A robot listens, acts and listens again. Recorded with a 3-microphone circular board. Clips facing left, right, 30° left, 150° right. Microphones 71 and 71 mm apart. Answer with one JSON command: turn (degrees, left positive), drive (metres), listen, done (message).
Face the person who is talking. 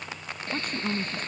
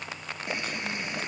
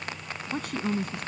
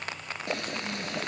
{"turn": 50}
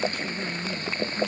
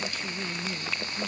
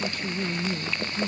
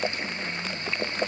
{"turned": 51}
{"done": "Facing the woman speaking."}